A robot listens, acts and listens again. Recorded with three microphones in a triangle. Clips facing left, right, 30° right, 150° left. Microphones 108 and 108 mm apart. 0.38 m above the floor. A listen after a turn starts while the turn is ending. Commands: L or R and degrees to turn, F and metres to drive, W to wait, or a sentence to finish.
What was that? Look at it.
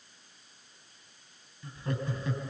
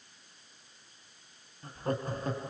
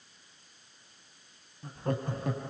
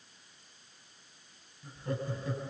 R45
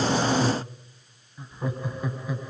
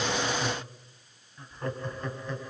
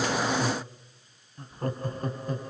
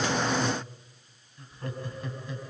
L10
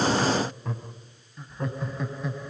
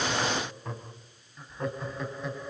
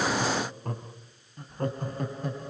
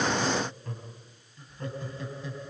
Facing the laughter.